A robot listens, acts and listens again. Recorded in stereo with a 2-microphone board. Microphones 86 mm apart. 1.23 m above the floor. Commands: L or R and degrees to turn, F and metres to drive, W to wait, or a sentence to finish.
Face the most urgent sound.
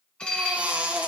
R30
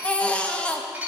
L15
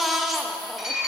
Found it: a baby crying, straight ahead.